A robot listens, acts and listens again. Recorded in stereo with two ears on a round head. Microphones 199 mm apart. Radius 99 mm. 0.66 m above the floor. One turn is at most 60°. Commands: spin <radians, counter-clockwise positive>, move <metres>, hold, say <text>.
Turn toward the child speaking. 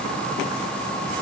hold
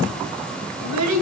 spin -1.05
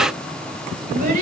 spin -0.61
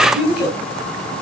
say Found it: a child speaking, straight ahead, over 4 m away.